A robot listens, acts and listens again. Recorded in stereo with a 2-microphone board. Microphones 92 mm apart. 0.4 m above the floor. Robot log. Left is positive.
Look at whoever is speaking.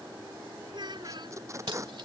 note: The child speaking: about 55° right or 125° right.
cmd yaw -55
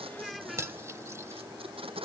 end: Facing the child speaking.